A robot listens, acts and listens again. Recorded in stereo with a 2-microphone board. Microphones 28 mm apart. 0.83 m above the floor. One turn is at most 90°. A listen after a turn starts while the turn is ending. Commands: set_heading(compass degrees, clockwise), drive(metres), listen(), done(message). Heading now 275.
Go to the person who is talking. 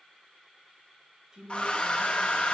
set_heading(295)
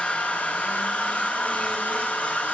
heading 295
listen()
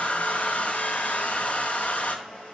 listen()
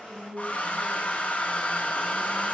drive(1.0)
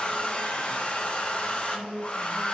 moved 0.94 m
drive(1.0)
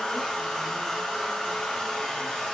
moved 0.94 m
listen()
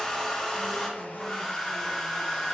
listen()
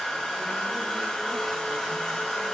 done("Facing where the woman speaking came from. I can't hear it now. I did not reach it.")